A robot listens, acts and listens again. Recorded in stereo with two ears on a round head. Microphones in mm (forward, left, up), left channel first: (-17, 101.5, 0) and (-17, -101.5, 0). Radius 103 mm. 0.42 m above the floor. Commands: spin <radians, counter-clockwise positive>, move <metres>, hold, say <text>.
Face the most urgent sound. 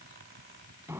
hold
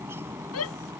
spin 1.57
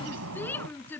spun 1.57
spin 0.17
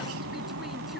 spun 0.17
hold
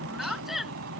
say Facing the shout.